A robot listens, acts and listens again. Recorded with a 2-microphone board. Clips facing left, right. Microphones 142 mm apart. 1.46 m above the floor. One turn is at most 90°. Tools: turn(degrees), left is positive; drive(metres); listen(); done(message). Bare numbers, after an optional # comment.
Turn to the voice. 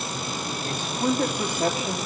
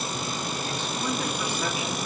# The man speaking: about 45° left or 135° left.
turn(45)
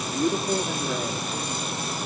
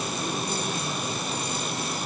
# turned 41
# So it is at 95° left.
turn(90)
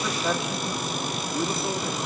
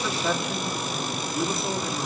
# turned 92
done("Found it: a man speaking, straight ahead, 2 to 4 m away.")